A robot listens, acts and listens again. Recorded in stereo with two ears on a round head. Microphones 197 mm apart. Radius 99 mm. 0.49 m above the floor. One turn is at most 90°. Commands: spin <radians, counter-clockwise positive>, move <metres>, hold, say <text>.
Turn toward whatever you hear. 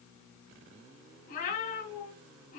spin 0.70
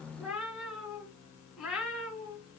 say Found it: a cat meowing, straight ahead, 2 to 4 m away.